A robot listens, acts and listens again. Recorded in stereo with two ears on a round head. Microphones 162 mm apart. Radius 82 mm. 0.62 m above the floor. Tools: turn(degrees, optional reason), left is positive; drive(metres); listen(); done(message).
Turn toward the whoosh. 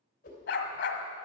turn(degrees=45, reason="The whoosh: about 45° left or 135° left.")
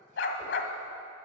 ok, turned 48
listen()
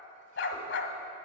listen()
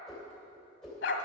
done("Found it: a whoosh, straight ahead.")